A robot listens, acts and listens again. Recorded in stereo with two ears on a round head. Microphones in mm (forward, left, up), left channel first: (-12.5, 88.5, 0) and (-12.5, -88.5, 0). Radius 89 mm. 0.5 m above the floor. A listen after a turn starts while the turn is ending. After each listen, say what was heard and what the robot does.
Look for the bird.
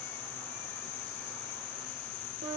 Keep listening.
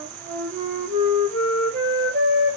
Keep listening.
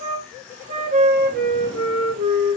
I can't make out a bird, only a flute.